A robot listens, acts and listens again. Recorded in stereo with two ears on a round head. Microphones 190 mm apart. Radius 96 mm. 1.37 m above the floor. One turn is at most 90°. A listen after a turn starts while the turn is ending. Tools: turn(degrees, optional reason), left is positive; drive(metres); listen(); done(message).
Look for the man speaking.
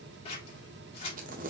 listen()
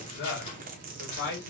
turn(degrees=60, reason="The man speaking: about 60° left or 120° left.")
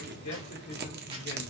listen()
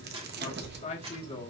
turn(degrees=20, reason="So it is at 20° left.")
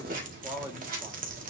turn(degrees=-15, reason="The man speaking is now 15° right.")
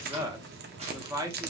turn(degrees=-15, reason="The man speaking is now 15° right.")
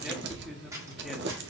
listen()
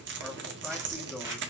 listen()
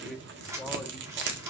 done("Facing the man speaking.")